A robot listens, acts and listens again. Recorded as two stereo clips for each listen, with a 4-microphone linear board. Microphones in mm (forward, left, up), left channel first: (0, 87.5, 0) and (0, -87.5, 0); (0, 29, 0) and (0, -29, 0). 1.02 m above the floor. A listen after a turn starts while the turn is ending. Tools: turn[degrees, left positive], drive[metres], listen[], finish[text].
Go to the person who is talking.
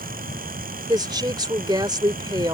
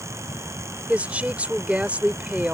Thought: The woman speaking: about 25° right or 155° right.
Action: turn[-25]
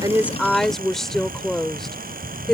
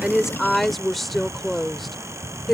Action: drive[1.0]
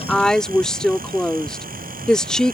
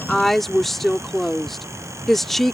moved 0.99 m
Action: drive[1.0]
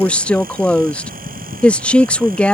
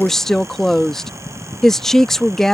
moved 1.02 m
Action: drive[1.0]
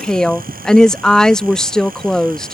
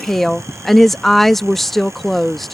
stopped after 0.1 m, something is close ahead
Action: finish[Arrived at the woman speaking, straight ahead.]